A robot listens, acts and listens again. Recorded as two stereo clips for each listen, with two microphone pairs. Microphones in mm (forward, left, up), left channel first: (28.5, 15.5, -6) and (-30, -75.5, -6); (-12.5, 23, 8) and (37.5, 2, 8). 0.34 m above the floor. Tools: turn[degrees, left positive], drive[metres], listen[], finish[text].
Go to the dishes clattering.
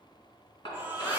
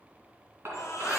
Thought: The dishes clattering: 15° left.
Action: turn[15]
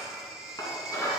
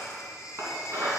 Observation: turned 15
Action: drive[1.0]
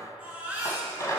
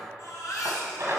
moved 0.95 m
Action: drive[1.0]
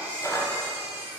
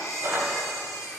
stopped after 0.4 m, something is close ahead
Action: finish[Arrived at the dishes clattering, straight ahead.]